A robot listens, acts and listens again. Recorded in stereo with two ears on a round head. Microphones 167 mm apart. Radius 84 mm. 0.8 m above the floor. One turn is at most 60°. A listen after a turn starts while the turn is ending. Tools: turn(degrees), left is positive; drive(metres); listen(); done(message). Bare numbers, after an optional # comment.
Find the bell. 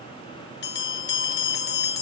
# The bell: about 55° left or 125° left.
turn(55)
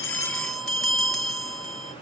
done("Found it: a bell, straight ahead.")